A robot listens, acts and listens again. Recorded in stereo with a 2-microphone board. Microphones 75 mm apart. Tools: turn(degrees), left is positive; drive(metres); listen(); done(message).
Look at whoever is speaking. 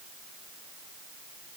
listen()
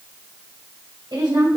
turn(degrees=-75)
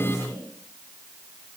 listen()
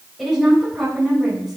done("Facing the woman speaking.")